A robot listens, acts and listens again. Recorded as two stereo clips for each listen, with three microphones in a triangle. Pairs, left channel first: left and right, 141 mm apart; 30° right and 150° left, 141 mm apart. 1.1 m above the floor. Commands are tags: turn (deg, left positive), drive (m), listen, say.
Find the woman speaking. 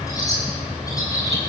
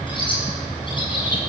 <listen/>
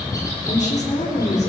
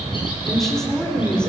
<turn deg="55"/>
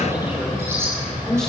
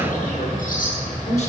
<say>Facing the woman speaking, over 4 m away.</say>